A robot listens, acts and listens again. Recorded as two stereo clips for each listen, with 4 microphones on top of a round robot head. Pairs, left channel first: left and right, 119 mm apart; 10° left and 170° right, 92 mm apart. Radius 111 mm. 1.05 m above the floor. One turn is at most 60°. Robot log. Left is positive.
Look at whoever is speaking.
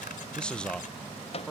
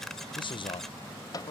note: The man speaking: 10° left.
cmd yaw +10
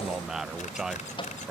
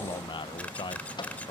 end: Facing the man speaking.